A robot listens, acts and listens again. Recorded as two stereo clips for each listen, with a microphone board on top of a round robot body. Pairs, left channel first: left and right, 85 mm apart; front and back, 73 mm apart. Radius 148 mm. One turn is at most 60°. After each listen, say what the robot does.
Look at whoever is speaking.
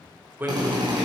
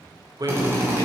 Turn 60° right.
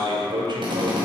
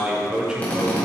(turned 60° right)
Turn 60° right.
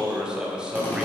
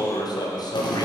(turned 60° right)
Turn 10° right.
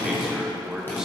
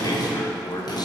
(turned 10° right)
Turn 10° right.
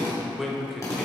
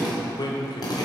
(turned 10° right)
Facing the man speaking.